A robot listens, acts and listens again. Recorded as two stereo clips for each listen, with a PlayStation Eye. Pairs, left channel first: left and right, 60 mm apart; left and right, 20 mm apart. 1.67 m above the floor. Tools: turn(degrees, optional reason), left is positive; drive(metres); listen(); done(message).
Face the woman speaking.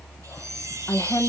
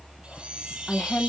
turn(degrees=60, reason="The woman speaking: about 60° left or 120° left.")
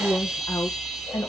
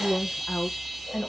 turn(degrees=80, reason="So it is at 80° left.")
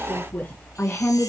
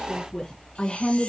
turn(degrees=35, reason="The woman speaking is now 35° left.")
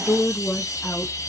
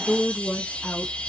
turn(degrees=10, reason="The woman speaking is now 10° left.")
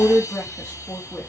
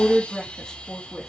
turn(degrees=10, reason="The woman speaking is now 10° left.")
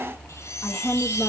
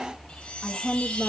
done("Found it: a woman speaking, straight ahead, 2 to 4 m away.")